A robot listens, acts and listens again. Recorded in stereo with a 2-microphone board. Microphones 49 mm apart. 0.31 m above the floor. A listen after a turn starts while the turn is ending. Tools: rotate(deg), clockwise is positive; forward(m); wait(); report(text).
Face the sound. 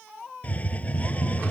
rotate(-30)
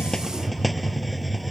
report("Facing the hiss.")